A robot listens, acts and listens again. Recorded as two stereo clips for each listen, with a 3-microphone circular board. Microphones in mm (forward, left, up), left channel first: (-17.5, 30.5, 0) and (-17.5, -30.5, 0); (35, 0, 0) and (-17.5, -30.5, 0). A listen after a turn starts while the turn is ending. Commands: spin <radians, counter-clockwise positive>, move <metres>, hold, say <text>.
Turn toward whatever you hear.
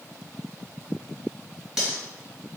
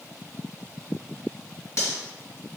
spin -0.17
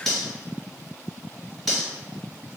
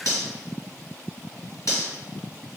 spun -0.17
say Found it: cutlery clinking, straight ahead, 1 to 2 m away.